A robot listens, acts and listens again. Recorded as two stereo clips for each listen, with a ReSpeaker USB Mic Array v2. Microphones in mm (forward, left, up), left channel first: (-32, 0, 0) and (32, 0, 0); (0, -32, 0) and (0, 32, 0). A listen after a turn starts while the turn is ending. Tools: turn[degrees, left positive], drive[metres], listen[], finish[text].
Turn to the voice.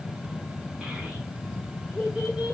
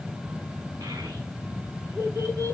Thought: The child speaking: 80° left.
Action: turn[80]
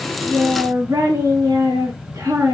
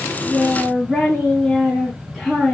Action: finish[Facing the child speaking.]